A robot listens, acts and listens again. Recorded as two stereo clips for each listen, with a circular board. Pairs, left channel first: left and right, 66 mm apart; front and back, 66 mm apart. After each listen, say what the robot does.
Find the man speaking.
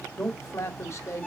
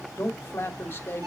Turn 55° left.
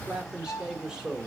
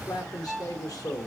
Turn 10° right.
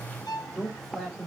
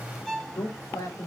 Found it: a man speaking, straight ahead.